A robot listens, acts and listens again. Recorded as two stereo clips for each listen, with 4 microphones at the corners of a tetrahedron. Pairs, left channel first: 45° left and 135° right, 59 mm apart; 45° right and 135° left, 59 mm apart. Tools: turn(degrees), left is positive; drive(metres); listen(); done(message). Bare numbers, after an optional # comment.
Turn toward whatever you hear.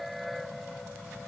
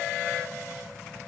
listen()
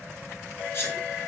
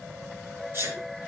# The sneeze: 90° left.
turn(90)
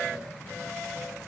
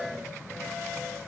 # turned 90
done("I heard a sneeze from this way, but can't make it out now.")